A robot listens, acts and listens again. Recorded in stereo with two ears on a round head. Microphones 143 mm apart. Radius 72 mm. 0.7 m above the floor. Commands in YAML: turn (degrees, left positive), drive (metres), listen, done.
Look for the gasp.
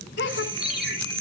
turn: 90
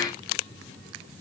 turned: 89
done: "Facing where the gasp came from. I can't hear it now."